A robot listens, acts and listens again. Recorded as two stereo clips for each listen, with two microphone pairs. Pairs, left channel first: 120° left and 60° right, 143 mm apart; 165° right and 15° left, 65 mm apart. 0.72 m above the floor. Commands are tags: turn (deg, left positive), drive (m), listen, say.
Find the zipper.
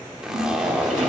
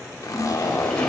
<turn deg="-145"/>
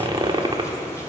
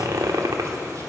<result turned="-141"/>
<say>Facing the zipper, 1 to 2 m away.</say>